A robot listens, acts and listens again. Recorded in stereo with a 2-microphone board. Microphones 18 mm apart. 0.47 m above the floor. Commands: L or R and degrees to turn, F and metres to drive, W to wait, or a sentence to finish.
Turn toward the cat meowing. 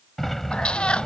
L75
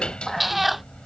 R10
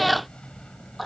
Found it: a cat meowing, straight ahead.